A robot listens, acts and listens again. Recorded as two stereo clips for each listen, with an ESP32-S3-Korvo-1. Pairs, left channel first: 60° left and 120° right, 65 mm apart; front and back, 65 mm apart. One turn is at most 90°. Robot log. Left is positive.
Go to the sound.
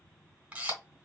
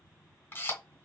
note: The camera shutter: 55° right.
cmd yaw -55
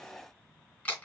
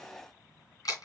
note: The camera shutter is now 10° right.
cmd yaw -10
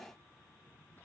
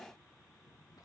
cmd idle
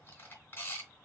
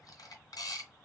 cmd fwd 1.0
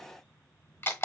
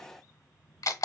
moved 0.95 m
note: The camera shutter is now 10° left.
cmd yaw +10
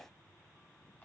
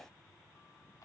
cmd idle
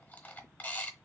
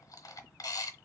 cmd fwd 1.0
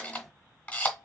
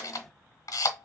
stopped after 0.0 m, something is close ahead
end: Arrived at the camera shutter, straight ahead.